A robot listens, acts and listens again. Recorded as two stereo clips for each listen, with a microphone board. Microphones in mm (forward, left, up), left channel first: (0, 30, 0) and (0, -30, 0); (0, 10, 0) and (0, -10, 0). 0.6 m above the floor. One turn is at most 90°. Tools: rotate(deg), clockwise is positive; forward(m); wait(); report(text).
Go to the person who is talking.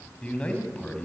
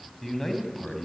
rotate(-20)
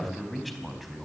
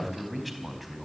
forward(1.0)
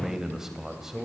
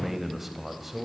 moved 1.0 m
rotate(10)
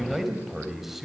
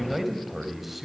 forward(1.0)
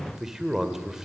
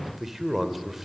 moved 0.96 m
rotate(10)
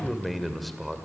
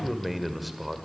forward(1.0)
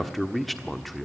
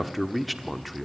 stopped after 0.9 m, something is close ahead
report("I am next to the man speaking.")